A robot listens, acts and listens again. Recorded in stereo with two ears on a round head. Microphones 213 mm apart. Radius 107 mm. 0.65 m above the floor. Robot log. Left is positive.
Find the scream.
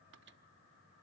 cmd idle
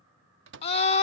note: The scream: about 25° left or 155° left.
cmd yaw +25
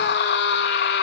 note: So it is at 130° left.
cmd yaw +130
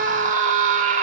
note: The scream is now 35° right.
cmd yaw -35
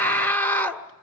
note: The scream is now 10° left.
cmd yaw +10
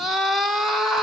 end: Found it: a scream, straight ahead, 1 to 2 m away.